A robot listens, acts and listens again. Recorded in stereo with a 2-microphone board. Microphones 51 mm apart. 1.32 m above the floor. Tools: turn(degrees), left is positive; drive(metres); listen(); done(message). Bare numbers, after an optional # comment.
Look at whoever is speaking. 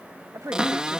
turn(-90)
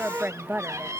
# So it is at 40° right.
turn(-40)
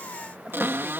# The woman speaking is now 20° right.
turn(-20)
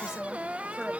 # The woman speaking is now 10° right.
turn(-10)
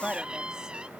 # The woman speaking is now 15° right.
turn(-15)
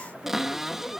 listen()
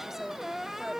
done("Found it: a woman speaking, straight ahead.")